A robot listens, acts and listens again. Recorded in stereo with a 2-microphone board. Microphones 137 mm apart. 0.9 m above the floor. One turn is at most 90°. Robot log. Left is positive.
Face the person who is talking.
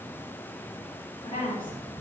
note: The woman speaking: about 35° left or 145° left.
cmd yaw +35
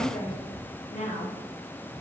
note: So it is at 105° left.
cmd yaw +90
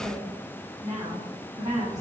note: The woman speaking is now 35° right.
cmd yaw -35
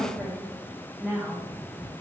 end: Found it: a woman speaking, straight ahead, 1 to 2 m away.